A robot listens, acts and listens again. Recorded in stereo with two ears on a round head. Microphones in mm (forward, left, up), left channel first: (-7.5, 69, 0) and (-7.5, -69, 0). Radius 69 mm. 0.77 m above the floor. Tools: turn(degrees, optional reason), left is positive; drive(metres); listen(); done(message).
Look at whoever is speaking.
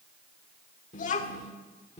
turn(degrees=40, reason="The child speaking: about 40° left or 140° left.")
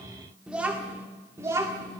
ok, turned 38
turn(degrees=-25, reason="So it is at 25° right.")
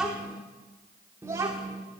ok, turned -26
turn(degrees=-25, reason="The child speaking is now 25° right.")
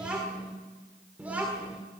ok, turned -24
turn(degrees=-10, reason="The child speaking is now 10° right.")
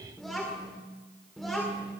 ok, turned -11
done("Found it: a child speaking, straight ahead, 2 to 4 m away.")